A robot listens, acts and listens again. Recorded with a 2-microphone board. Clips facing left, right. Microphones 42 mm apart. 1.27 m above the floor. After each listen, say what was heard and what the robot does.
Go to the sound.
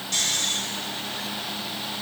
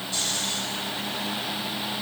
Turn 90° left.
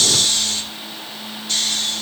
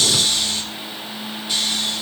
So it is at 15° right. Turn 15° right.
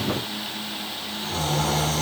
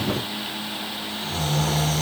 Drive 1.0 m forward.
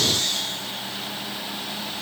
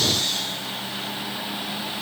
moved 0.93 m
Drive 1.0 m forward.
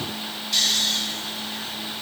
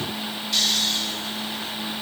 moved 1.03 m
Drive 1.0 m forward.
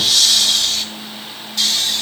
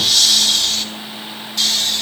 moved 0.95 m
Drive 1.0 m forward.
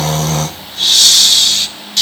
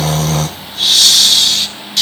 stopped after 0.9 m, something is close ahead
I am next to the snoring.